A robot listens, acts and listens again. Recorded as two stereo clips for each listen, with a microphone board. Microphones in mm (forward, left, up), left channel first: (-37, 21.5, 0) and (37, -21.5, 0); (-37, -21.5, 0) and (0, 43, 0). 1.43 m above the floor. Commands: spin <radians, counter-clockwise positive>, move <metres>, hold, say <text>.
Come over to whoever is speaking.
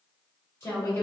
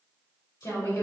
spin -2.62
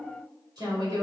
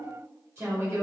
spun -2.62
spin 0.17
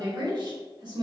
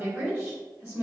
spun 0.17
move 1.0
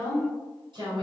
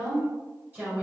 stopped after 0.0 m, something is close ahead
say Something is in my way. I am facing the woman speaking but have not reached it.